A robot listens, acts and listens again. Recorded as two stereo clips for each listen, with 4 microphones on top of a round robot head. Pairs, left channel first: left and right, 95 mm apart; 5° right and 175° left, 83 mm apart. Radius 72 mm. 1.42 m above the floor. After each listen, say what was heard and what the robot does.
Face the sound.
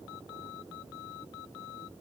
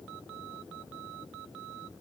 Keep listening.
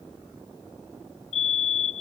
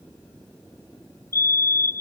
The fire alarm: 55° left. Turn 55° left.
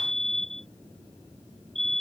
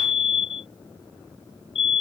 Found it: a fire alarm, straight ahead.